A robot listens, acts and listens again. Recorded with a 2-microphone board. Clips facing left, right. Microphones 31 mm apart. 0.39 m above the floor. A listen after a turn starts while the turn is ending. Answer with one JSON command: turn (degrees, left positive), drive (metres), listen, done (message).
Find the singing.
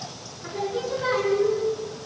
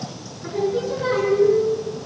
{"turn": 30}
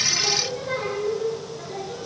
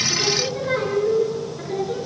{"turn": -20}
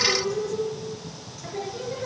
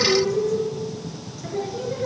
{"done": "Facing the singing, over 4 m away."}